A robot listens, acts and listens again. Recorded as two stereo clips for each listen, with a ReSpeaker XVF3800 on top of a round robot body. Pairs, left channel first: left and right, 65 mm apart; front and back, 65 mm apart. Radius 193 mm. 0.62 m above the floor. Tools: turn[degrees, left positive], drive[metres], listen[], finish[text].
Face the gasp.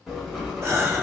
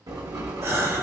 Thought: The gasp: 135° right.
Action: turn[-135]
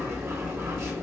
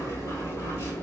Action: finish[I heard a gasp from this way, but can't make it out now.]